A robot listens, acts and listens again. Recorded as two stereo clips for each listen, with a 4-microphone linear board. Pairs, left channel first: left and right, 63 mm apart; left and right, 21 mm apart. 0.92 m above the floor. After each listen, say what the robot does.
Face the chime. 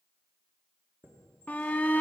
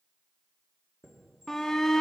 Turn 35° right.
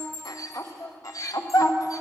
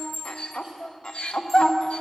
Facing the chime, 1 to 2 m away.